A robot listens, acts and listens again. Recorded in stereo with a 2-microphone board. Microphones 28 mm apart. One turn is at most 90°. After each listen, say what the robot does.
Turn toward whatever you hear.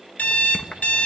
Turn 55° left.
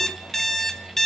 Turn 15° left.
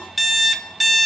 Found it: an alarm clock, straight ahead, 1 to 2 m away.